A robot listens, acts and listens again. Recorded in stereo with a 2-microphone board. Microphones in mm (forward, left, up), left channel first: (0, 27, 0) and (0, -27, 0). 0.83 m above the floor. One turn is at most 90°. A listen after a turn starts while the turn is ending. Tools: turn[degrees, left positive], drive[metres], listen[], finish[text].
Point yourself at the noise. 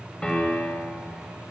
Thought: The piano: about 15° left or 165° left.
Action: turn[15]
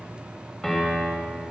Action: finish[Found it: a piano, straight ahead, 1 to 2 m away.]